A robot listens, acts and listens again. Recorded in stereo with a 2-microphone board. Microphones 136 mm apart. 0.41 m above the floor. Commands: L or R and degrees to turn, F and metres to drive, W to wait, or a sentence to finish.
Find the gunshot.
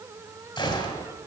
L35
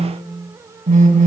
W
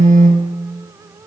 I heard a gunshot, but can't make it out now. It was about straight ahead or 110° left.